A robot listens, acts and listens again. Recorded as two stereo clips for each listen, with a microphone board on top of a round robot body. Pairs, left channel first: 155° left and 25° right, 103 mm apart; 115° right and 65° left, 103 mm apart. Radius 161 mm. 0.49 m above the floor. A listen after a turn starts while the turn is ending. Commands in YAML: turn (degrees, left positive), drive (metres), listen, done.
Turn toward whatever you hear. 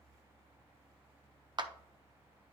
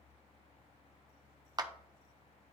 turn: 20
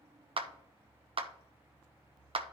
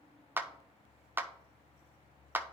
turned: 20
done: "Facing the clap, 1 to 2 m away."